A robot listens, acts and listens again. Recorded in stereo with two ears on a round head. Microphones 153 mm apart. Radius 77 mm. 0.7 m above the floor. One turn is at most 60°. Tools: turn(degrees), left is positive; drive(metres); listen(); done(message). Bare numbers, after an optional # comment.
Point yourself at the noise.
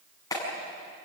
# The clap: about 20° left or 160° left.
turn(20)
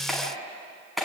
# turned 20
done("Found it: a clap, straight ahead, over 4 m away.")